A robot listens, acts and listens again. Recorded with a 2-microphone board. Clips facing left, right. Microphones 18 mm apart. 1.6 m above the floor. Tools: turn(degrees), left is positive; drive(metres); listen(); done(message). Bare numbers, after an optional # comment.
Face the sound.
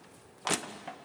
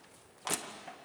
# The crushing: about 25° left or 155° left.
turn(25)
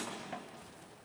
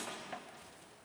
done("Facing the crushing, 1 to 2 m away.")